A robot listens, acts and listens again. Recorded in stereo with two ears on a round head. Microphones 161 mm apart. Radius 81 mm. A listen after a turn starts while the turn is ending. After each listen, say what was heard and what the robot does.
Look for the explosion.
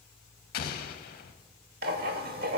The explosion: about 55° left or 125° left. Turn 55° left.
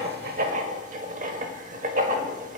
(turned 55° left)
Keep listening.
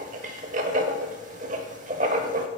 I heard an explosion, but can't make it out now. It was about straight ahead or 70° left.